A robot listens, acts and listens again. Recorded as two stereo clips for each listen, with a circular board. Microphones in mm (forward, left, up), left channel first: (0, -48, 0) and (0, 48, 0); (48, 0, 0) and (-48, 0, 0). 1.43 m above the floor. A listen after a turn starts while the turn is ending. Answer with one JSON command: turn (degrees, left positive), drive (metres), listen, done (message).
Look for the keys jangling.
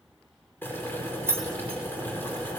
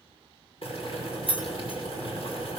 {"turn": 25}
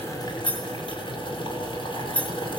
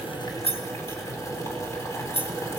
{"turn": -15}
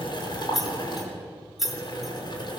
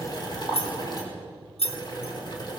{"done": "Found it: keys jangling, straight ahead, 2 to 4 m away."}